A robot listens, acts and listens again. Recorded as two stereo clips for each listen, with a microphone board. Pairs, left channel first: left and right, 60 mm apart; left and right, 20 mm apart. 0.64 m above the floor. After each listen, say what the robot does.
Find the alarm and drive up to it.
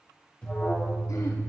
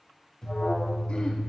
Turn 20° left.
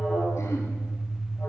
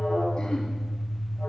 Turn 135° left.
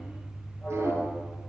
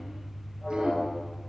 Turn 25° left.
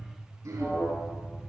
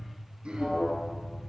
Turn 10° left.
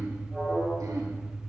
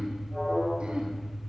Drive 1.0 m forward.
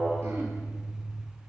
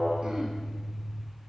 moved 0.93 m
Turn 10° right.
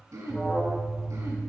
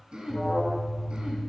Drive 1.0 m forward.
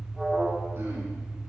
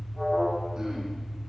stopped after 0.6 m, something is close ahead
Arrived at the alarm, straight ahead.